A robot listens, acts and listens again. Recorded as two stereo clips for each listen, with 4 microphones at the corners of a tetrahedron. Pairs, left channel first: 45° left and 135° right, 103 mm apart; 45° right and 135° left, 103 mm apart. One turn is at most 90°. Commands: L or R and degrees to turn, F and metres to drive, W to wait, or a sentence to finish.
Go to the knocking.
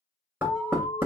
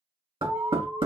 L90
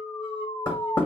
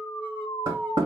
L90
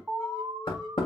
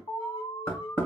L20
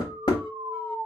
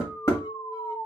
L10
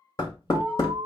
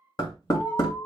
F1.0
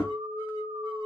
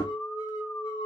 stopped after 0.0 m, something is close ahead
W
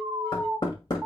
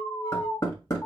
Blocked. The knocking is further on, straight ahead.